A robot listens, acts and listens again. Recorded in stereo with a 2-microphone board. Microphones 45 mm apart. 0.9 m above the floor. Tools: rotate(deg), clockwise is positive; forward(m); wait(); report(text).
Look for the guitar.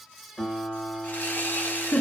rotate(-30)
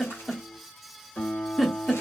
rotate(-140)
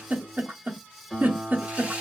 report("Facing the guitar.")